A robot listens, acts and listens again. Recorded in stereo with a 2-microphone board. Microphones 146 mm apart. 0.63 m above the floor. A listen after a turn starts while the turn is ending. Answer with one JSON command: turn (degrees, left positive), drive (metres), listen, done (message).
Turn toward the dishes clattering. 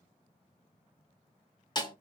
{"listen": true}
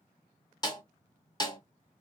{"listen": true}
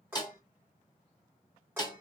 {"turn": -30}
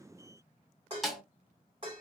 {"turn": -135}
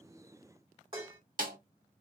{"turn": -40}
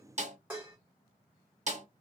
{"turn": -10}
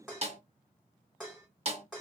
{"done": "Found it: dishes clattering, straight ahead."}